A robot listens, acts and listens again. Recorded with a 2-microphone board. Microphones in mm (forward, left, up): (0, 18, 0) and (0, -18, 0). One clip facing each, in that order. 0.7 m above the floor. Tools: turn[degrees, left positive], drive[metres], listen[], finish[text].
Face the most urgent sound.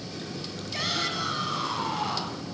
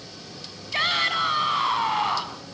Thought: The shout: about 40° right or 140° right.
Action: turn[-40]
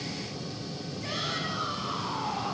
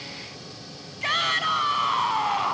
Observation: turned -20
Thought: So it is at 120° right.
Action: turn[-120]
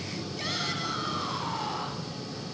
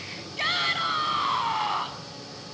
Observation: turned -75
Thought: The shout is now 45° right.
Action: turn[-45]
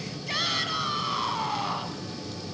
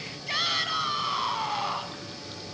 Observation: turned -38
Action: finish[Found it: a shout, straight ahead, over 4 m away.]